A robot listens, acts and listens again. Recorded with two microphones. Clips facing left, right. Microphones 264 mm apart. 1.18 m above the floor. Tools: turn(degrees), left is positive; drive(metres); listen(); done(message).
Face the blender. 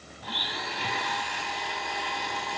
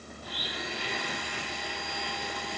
turn(degrees=90)
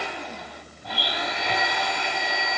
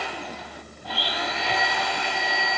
turn(degrees=15)
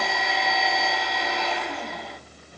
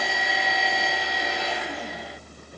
done("Found it: a blender, straight ahead.")